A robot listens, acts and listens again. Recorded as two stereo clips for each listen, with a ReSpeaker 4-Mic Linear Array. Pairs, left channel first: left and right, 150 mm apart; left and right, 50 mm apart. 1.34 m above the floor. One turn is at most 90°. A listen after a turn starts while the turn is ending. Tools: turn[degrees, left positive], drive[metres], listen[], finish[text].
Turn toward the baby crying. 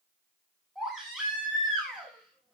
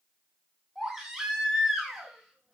Action: turn[-30]
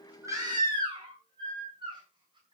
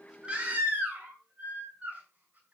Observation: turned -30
Thought: So it is at 150° right.
Action: turn[-90]
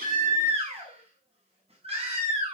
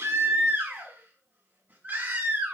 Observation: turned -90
Thought: The baby crying is now 40° right.
Action: turn[-40]
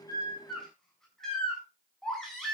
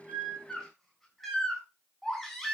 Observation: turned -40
Action: finish[Facing the baby crying.]